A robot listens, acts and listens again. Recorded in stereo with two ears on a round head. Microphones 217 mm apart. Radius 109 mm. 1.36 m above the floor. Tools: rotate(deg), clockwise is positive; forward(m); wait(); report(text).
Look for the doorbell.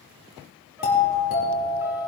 rotate(-40)
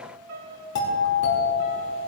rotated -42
rotate(-100)
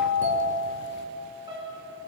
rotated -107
rotate(10)
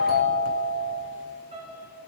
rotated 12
report("Found it: a doorbell, straight ahead.")